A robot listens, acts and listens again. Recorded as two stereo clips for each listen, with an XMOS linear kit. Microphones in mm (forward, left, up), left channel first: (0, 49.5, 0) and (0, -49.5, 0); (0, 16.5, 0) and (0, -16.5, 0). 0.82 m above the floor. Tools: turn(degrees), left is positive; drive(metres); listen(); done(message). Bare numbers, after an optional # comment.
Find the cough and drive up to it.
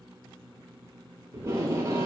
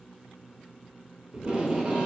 listen()
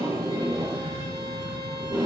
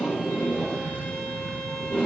# The cough: about 45° right or 135° right.
turn(-45)
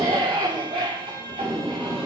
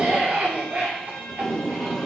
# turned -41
# So it is at 90° right.
turn(-90)
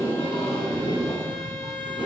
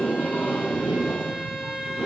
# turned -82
listen()
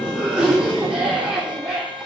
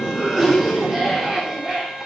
drive(1.0)
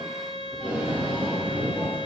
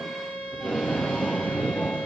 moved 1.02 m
listen()
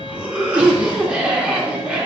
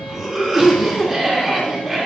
# The cough is now 15° right.
turn(-15)
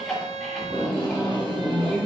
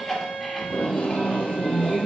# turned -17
drive(1.0)
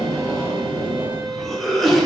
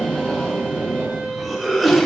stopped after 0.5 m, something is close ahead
done("Arrived at the cough, straight ahead.")